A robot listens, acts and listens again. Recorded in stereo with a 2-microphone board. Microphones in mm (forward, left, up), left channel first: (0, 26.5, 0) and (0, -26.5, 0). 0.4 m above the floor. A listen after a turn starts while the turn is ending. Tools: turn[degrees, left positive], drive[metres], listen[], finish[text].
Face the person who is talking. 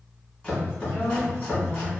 Thought: The woman speaking: about 45° left or 135° left.
Action: turn[45]
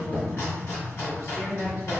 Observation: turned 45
Thought: So it is at 85° left.
Action: turn[85]
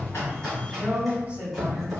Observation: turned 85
Thought: The woman speaking is now 30° right.
Action: turn[-30]
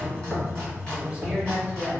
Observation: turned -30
Thought: The woman speaking is now 15° right.
Action: turn[-15]
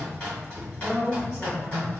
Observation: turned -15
Action: finish[Facing the woman speaking, 1 to 2 m away.]